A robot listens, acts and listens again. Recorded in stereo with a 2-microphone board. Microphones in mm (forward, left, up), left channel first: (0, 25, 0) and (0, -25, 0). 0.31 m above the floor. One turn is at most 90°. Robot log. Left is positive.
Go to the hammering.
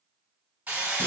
note: The hammering: about 40° right or 140° right.
cmd yaw -40
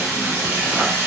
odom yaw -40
note: So it is at 95° right.
cmd yaw -90
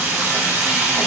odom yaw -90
note: The hammering is now 30° right.
cmd yaw -30
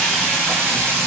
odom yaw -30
cmd fwd 1.0
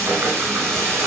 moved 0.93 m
cmd idle
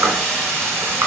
note: The hammering is now 15° left.
cmd yaw +15
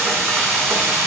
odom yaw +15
cmd fwd 1.0
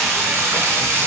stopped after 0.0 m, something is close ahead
end: I am next to the hammering.